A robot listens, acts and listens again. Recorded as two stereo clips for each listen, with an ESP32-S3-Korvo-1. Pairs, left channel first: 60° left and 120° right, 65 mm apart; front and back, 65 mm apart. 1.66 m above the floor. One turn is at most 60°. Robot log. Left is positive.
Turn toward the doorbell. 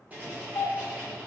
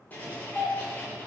note: The doorbell: 90° left.
cmd yaw +60
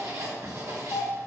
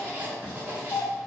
note: The doorbell is now 30° left.
cmd yaw +30
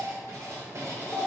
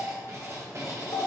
end: Found it: a doorbell, straight ahead, 1 to 2 m away.